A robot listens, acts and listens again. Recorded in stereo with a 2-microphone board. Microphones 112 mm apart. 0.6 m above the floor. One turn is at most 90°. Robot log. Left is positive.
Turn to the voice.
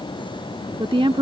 note: The woman speaking: about 50° right or 130° right.
cmd yaw -50
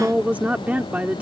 note: So it is at 15° right.
cmd yaw -15
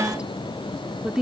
note: The woman speaking is now 10° right.
cmd yaw -10
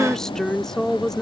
end: Facing the woman speaking.